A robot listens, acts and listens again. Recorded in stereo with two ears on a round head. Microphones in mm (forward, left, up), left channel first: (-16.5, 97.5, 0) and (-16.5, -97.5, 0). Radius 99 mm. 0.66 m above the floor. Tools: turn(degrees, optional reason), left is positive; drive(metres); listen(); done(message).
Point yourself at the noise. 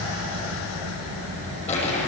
turn(degrees=30, reason="The crumpling: about 30° left or 150° left.")
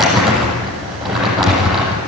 done("Found it: crumpling, straight ahead, over 4 m away.")